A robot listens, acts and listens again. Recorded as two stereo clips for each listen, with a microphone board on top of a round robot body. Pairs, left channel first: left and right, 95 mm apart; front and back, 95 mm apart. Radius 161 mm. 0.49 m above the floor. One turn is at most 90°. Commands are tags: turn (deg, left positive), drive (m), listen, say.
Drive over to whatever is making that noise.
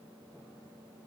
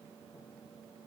<listen/>
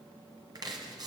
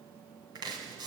<turn deg="-90"/>
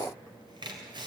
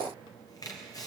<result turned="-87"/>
<turn deg="-50"/>
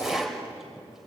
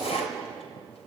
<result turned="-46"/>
<drive m="1.0"/>
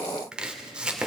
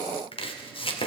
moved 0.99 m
<turn deg="-10"/>
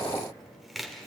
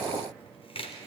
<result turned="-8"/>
<drive m="1.0"/>
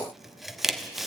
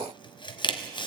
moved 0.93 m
<drive m="1.0"/>
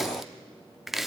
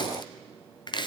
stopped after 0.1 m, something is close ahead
<say>Arrived at the chopping, straight ahead.</say>